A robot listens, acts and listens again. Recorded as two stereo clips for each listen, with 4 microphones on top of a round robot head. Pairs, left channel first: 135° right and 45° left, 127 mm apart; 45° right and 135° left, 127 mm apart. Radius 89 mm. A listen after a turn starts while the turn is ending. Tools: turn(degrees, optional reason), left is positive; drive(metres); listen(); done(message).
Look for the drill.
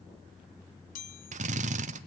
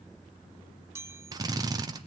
turn(degrees=75, reason="The drill: 75° left.")
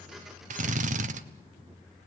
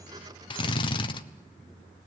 turn(degrees=10, reason="The drill is now 10° left.")
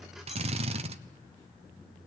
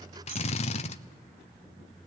done("Facing the drill, 1 to 2 m away.")